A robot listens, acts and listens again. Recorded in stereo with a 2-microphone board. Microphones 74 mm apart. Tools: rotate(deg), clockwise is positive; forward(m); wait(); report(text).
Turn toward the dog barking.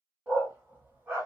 rotate(25)
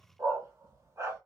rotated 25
rotate(40)
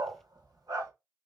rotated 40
rotate(120)
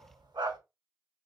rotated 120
rotate(75)
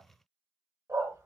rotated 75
rotate(40)
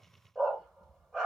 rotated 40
report("Found it: a dog barking, straight ahead.")